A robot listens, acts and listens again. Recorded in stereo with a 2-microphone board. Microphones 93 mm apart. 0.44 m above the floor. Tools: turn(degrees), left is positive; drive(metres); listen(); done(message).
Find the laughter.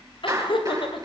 turn(degrees=65)
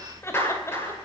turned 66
listen()
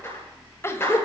turn(degrees=30)
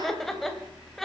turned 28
done("Found it: laughter, straight ahead.")